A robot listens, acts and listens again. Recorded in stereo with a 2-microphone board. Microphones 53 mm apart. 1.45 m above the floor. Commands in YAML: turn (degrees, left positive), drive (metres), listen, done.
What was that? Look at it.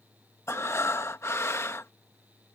turn: 60
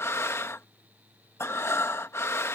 turn: 60
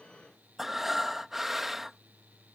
done: "Found it: breathing, straight ahead."